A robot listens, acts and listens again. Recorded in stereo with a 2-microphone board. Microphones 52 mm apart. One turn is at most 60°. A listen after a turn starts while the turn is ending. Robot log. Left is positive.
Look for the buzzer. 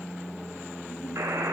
cmd yaw -60
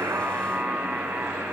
note: So it is at 45° right.
cmd yaw -45
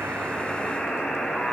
end: Found it: a buzzer, straight ahead.